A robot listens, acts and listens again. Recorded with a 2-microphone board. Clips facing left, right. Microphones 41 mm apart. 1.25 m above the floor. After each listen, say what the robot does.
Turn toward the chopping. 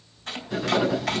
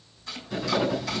Turn 55° left.
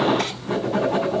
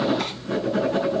Keep listening.
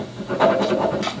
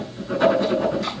Keep listening.
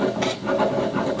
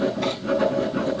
I heard chopping, but can't make it out now. It was about straight ahead or 70° left.